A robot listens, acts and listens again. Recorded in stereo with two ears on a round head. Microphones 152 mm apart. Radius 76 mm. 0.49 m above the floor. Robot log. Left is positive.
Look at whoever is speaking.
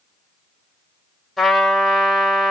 cmd idle
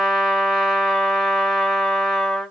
cmd idle
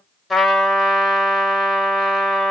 end: I can't make out anyone speaking, only a trumpet.